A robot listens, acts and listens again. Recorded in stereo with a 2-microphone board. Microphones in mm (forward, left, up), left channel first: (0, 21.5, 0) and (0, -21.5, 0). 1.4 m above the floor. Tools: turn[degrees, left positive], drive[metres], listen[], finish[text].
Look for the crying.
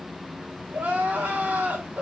Thought: The crying: about 35° right or 145° right.
Action: turn[-35]
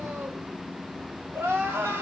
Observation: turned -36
Thought: So it is at 110° right.
Action: turn[-110]
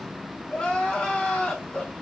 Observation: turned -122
Thought: The crying is now 15° left.
Action: turn[15]
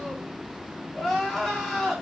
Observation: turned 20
Action: finish[Facing the crying, 1 to 2 m away.]